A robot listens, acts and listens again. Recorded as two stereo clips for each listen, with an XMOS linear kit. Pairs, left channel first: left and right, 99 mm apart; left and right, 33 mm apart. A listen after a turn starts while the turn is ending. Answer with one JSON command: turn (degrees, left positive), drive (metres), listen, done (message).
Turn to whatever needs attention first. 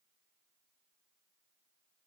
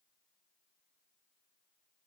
{"listen": true}
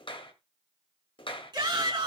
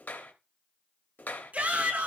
{"turn": -45}
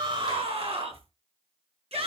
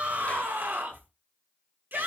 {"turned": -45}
{"turn": -90}
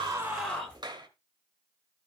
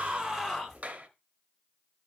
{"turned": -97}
{"turn": 10}
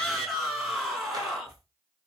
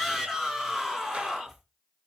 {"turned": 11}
{"done": "Facing the shout."}